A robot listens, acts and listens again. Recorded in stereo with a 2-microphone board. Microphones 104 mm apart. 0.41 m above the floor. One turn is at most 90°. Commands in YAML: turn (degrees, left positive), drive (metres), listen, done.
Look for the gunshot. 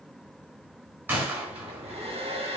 turn: -20
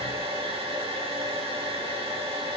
listen: true
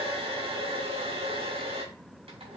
done: "I heard a gunshot, but can't make it out now. It was about straight ahead or 140° right."